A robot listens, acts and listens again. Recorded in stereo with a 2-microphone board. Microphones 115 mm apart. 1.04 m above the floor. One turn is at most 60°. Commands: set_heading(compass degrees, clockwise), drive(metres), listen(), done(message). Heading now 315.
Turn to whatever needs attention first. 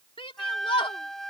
set_heading(260)
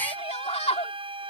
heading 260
set_heading(200)
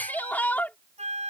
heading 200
set_heading(185)
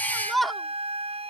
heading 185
done("Found it: a shout, straight ahead.")